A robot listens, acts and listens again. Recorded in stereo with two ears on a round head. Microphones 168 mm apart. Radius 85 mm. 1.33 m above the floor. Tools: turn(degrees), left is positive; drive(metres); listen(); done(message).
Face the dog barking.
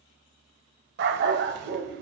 turn(degrees=-60)
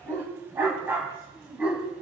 done("Facing the dog barking, 2 to 4 m away.")